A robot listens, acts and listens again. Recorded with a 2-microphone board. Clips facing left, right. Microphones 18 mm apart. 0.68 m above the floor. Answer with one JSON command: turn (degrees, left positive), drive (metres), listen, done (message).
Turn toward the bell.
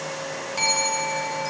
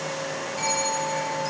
{"turn": 45}
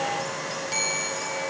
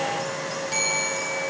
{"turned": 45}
{"done": "Facing the bell, over 4 m away."}